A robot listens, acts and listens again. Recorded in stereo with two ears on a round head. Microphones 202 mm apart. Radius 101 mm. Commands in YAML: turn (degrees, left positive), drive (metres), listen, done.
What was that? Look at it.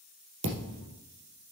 turn: -55
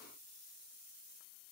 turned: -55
listen: true
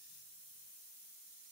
done: "I heard a thud, but can't make it out now. It was about straight ahead or 70° right."